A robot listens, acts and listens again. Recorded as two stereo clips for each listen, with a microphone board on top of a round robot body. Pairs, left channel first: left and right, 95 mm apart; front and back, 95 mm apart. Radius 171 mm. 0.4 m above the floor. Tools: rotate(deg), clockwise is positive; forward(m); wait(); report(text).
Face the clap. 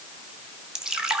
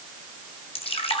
wait()
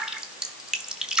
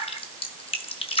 wait()
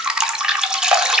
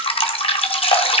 report("I can't make out a clap, only dripping.")